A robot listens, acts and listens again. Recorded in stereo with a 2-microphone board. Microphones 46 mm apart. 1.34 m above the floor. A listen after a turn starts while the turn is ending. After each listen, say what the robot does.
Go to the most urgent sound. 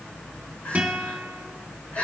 Turn 30° left.
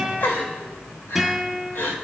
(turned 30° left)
Turn 120° left.
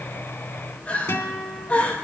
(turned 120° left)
Turn 35° left.
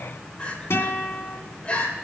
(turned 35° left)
Turn 25° left.
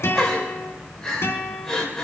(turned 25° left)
Turn 10° left.
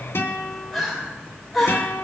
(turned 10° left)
Drive 1.0 m forward.
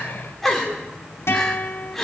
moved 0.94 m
Drive 1.0 m forward.
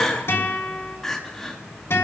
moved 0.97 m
Turn 10° left.
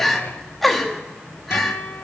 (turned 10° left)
Drive 1.0 m forward.
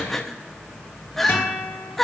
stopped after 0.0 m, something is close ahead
Arrived at the crying, straight ahead.